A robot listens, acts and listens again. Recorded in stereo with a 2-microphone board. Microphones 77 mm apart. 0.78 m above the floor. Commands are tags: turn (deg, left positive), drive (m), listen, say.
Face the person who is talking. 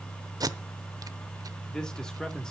<turn deg="30"/>
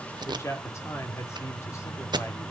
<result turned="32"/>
<turn deg="140"/>
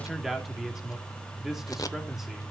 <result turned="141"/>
<say>Facing the man speaking, 2 to 4 m away.</say>